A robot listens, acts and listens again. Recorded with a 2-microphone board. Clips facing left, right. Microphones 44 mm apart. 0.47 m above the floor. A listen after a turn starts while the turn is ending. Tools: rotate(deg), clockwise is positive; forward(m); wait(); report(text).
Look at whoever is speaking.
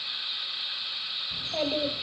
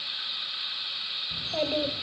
rotate(-30)
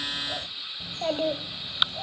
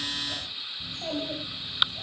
rotate(-130)
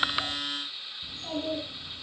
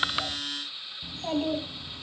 rotate(40)
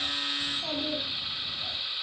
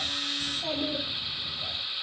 report("Facing the child speaking.")